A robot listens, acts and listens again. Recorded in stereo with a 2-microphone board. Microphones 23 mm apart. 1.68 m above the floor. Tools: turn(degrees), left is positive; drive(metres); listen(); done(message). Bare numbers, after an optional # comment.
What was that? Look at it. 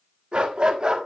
# The dog barking: about 40° right or 140° right.
turn(-40)
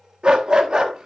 # The dog barking: about 35° right or 145° right.
turn(-35)
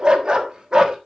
# The dog barking: about 35° right or 145° right.
turn(-35)
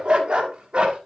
# The dog barking: about 50° right or 130° right.
turn(-50)
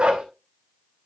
# So it is at 60° right.
turn(-60)
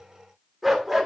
done("Found it: a dog barking, straight ahead, 2 to 4 m away.")